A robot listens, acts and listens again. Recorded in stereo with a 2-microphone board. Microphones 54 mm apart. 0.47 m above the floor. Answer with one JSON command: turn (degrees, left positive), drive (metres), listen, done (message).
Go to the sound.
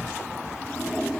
{"turn": 15}
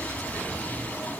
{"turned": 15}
{"turn": 150}
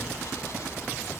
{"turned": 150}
{"listen": true}
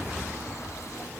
{"listen": true}
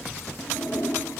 {"turn": 70}
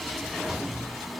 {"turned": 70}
{"listen": true}
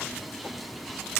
{"listen": true}
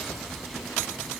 {"done": "Facing where the toilet flushing came from. I can't hear it now. I did not reach it."}